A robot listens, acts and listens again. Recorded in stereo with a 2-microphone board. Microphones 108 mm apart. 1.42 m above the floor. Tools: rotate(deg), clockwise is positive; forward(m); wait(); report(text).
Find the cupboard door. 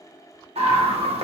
wait()
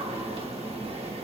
wait()
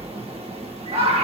report("I can't make out a cupboard door, only a scream.")